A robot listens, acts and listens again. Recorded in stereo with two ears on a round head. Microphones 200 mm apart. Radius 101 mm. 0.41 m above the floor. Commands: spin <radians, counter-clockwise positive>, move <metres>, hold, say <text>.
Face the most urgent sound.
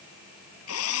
hold
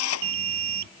spin -0.87
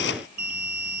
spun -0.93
spin -1.31
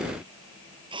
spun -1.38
hold
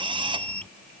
say Facing the alarm.